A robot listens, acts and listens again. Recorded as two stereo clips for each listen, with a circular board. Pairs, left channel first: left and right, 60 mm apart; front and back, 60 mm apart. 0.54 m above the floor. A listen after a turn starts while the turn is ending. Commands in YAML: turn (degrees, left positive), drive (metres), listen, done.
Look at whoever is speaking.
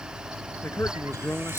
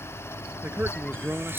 turn: 125
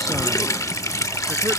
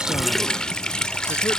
listen: true
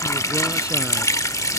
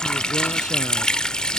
listen: true
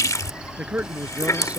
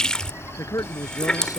turn: -25
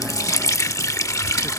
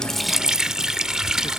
listen: true
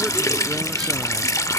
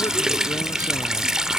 listen: true
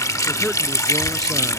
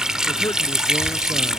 done: "I heard a man speaking from this way, but can't make it out now."